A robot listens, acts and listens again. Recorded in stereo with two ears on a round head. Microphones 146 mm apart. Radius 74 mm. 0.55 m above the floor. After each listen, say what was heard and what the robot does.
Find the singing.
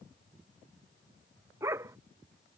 Keep listening.
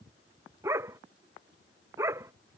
Keep listening.
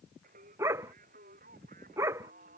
The singing: about 50° right or 130° right. Turn 50° right.
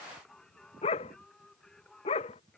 Facing the singing.